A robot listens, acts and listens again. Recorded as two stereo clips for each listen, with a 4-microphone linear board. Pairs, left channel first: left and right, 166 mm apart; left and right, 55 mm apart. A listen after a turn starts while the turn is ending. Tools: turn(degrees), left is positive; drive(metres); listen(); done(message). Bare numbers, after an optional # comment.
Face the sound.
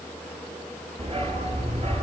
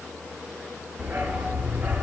# The dog barking: about 40° right or 140° right.
turn(-40)
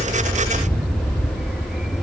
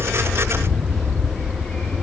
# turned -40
done("Facing the dog barking, over 4 m away.")